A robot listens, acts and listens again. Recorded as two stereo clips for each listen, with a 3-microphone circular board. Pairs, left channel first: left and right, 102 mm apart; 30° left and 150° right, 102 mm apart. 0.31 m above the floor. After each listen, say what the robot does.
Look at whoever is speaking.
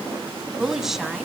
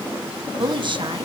Turn 175° right.
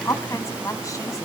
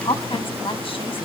Turn 40° left.
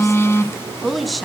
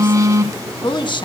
Facing the woman speaking, 1 to 2 m away.